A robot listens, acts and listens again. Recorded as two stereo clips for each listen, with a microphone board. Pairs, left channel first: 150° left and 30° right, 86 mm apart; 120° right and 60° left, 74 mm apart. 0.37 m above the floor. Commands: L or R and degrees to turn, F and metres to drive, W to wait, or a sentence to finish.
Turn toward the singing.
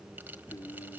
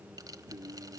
L105
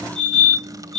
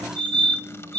W
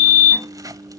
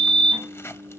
L10
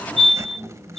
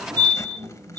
W
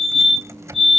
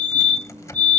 W
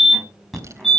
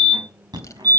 I heard singing from this way, but can't make it out now.